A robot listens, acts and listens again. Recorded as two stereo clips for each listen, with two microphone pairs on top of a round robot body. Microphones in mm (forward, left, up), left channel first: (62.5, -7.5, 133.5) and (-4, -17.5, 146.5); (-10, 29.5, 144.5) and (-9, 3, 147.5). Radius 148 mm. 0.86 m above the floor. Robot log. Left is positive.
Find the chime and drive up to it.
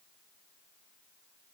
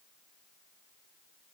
cmd idle
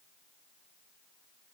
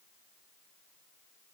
cmd idle
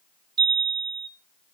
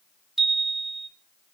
note: The chime: 175° right.
cmd yaw -175
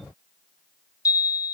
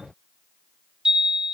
note: The chime is now 25° right.
cmd yaw -25
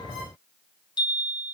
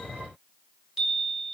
cmd fwd 1.0
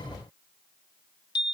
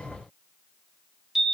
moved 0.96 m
note: The chime is now 10° right.
cmd yaw -10
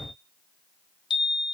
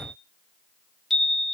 cmd fwd 1.0
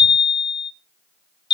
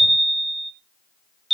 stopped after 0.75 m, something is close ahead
end: Arrived at the chime, straight ahead.